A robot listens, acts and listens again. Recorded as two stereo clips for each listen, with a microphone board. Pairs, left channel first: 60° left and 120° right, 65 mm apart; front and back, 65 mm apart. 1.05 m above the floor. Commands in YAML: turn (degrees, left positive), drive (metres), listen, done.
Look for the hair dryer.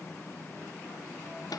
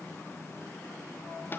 listen: true
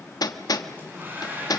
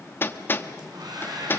turn: 180
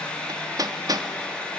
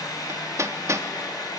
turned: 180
turn: -15
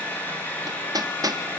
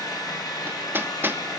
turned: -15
done: "Facing the hair dryer."